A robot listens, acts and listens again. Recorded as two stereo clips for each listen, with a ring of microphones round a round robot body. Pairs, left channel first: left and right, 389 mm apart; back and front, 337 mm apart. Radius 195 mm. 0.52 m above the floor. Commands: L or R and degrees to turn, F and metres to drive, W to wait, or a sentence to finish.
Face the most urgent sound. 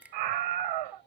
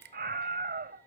R65
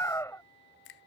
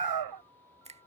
Facing the scream.